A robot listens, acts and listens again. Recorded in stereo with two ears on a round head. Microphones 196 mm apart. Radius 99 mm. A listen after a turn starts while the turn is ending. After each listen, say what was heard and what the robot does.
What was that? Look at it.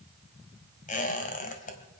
The squeak: about 35° left or 145° left. Turn 35° left.
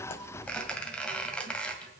Facing the squeak.